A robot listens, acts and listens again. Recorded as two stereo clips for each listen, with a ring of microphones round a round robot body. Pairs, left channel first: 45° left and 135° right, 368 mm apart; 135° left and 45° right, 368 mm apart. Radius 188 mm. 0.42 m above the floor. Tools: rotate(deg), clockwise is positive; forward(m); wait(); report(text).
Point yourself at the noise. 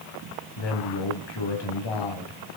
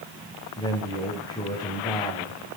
rotate(-55)
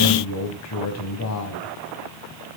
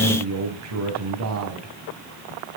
report("Facing the man speaking, 2 to 4 m away.")